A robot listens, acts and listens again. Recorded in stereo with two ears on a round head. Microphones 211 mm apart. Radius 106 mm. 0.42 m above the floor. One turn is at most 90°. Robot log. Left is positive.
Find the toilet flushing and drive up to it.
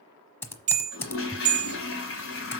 note: The toilet flushing: about 60° left or 120° left.
cmd yaw +60
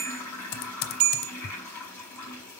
note: So it is at 10° left.
cmd yaw +10
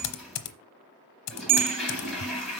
cmd fwd 1.0
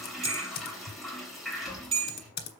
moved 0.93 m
cmd fwd 1.0
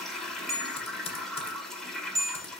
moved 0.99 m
cmd fwd 1.0
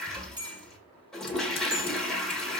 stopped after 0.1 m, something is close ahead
end: Arrived at the toilet flushing, straight ahead.